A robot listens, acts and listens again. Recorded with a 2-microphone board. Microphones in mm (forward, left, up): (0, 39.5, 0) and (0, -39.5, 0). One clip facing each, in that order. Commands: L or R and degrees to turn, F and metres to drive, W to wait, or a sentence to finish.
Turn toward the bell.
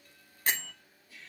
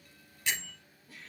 L40
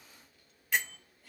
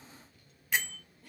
Facing the bell, under 1 m away.